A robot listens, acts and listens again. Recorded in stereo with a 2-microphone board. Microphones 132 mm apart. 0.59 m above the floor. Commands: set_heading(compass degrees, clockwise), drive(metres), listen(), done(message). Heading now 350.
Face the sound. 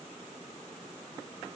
listen()
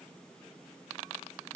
listen()
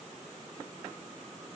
done("I can't make out anything to turn to.")